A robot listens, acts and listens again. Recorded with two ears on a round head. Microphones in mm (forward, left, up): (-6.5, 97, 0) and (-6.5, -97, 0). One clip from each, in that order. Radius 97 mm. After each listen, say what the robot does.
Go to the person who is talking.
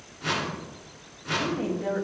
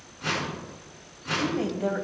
Turn 55° right.
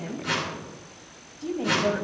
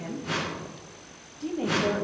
Drive 1.0 m forward.
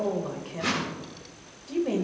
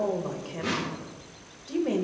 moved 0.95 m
Turn 10° right.
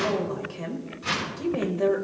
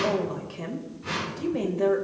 Drive 1.0 m forward.
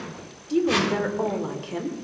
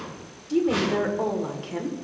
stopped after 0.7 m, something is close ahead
Arrived at the woman speaking, straight ahead.